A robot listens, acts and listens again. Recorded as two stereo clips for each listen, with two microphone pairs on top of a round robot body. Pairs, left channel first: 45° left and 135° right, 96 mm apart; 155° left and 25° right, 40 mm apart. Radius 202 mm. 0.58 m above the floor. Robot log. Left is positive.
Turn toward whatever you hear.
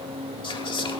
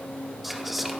note: The whispering: 65° left.
cmd yaw +65
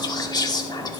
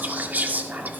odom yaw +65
note: The whispering is now 10° left.
cmd yaw +10
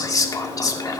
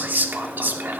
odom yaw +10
end: Found it: whispering, straight ahead.